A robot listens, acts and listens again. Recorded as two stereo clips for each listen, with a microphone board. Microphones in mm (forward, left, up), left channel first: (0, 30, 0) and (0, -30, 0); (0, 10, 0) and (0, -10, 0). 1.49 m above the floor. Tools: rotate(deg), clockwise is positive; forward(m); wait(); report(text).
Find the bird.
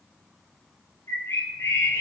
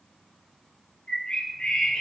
rotate(-60)
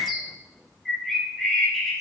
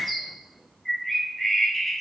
report("Facing the bird.")